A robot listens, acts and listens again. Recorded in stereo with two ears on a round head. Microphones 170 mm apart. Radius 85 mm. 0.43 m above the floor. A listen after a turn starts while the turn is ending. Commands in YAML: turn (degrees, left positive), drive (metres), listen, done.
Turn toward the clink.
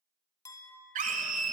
turn: 20
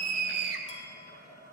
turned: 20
listen: true
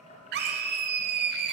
listen: true
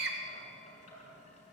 done: "I heard a clink, but can't make it out now. It was about straight ahead or 140° left."